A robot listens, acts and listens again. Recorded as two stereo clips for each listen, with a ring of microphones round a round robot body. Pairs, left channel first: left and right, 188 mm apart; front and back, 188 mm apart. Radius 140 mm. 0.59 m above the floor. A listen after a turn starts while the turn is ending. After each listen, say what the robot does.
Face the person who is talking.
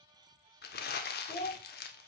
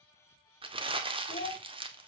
Turn 35° left.
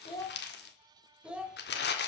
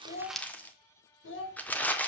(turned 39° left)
Found it: a child speaking, straight ahead, 2 to 4 m away.